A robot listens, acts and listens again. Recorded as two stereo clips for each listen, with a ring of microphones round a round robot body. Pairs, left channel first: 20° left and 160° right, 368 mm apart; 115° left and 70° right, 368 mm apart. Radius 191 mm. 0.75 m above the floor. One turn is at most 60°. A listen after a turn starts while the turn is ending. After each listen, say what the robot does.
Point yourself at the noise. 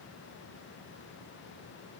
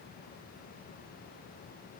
Keep listening.
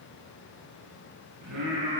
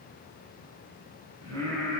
Turn 60° right.
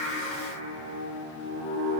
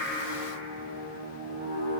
Turn 60° right.
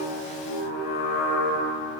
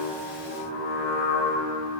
Found it: singing, straight ahead.